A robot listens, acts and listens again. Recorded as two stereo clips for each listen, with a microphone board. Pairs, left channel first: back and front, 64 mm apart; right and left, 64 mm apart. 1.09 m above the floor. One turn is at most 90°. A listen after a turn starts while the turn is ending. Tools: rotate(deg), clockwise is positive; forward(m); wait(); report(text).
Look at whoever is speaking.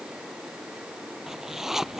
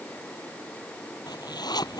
wait()
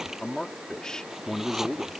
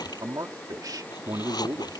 rotate(-90)
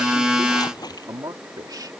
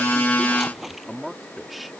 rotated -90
report("Facing the man speaking.")